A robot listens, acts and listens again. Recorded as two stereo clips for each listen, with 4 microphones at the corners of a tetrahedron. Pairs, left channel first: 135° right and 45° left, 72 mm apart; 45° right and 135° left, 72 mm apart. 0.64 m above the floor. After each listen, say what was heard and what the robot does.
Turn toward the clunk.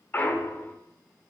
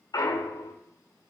The clunk: 70° right. Turn 70° right.
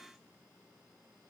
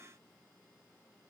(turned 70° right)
I heard a clunk from this way, but can't make it out now.